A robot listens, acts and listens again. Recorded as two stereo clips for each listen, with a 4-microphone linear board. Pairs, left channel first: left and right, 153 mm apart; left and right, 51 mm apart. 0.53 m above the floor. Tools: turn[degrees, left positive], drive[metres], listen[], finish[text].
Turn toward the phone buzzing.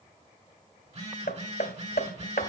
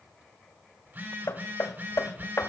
Thought: The phone buzzing: about 45° right or 135° right.
Action: turn[-45]
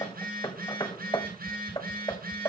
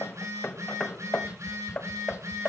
Thought: So it is at 90° right.
Action: turn[-90]
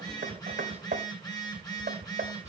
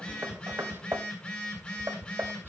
Thought: The phone buzzing is now 25° left.
Action: turn[25]
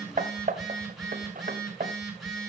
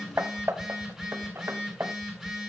Action: finish[Found it: a phone buzzing, straight ahead, over 4 m away.]